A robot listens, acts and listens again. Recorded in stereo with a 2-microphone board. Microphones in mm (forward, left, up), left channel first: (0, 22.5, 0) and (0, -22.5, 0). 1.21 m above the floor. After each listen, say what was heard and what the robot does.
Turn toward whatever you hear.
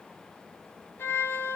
Turn 90° left.
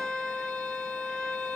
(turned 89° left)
So it is at 15° left. Turn 15° left.
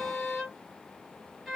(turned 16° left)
Found it: a violin, straight ahead.